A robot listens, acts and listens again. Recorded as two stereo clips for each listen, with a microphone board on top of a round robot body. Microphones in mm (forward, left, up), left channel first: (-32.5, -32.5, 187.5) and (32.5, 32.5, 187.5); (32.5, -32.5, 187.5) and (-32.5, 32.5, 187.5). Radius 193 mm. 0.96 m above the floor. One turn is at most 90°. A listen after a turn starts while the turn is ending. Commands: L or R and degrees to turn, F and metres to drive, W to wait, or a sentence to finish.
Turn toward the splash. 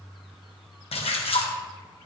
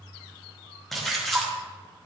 R90
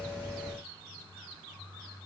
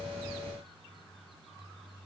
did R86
R50
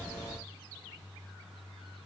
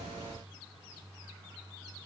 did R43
Facing where the splash came from. I can't hear it now.